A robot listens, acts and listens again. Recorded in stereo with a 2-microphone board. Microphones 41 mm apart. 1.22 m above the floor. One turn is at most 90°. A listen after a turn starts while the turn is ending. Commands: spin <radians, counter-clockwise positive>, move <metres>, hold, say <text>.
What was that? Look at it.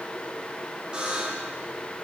spin -0.35
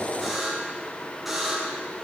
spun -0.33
say Found it: a buzzer, straight ahead.